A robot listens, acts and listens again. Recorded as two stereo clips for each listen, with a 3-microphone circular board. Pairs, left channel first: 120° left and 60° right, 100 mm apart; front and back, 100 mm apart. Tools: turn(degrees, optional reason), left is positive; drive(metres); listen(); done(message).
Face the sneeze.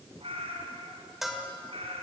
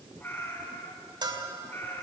listen()
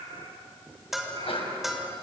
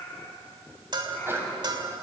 turn(degrees=115, reason="The sneeze: 115° left.")
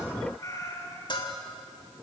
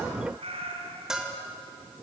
done("I heard a sneeze from this way, but can't make it out now.")